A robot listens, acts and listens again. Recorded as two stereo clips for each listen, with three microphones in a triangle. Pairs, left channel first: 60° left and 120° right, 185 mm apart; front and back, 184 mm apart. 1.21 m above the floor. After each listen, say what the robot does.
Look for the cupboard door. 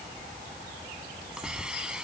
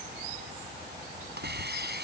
Keep listening.
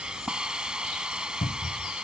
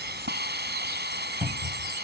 Turn 95° left.
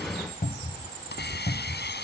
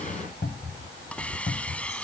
Turn 20° left.
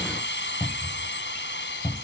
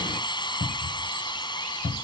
Facing the cupboard door.